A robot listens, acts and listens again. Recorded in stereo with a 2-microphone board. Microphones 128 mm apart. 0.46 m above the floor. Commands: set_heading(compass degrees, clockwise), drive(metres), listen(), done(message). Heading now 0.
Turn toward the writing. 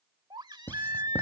set_heading(345)
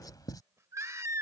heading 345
set_heading(195)
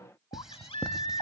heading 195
done("Facing the writing.")